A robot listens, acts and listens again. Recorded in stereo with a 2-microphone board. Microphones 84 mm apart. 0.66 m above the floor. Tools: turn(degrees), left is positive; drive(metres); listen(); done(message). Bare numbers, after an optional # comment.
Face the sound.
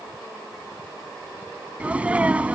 turn(-30)
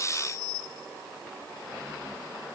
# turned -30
listen()
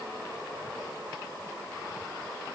done("I heard a sneeze, but can't make it out now. It was about 15° left or 135° right.")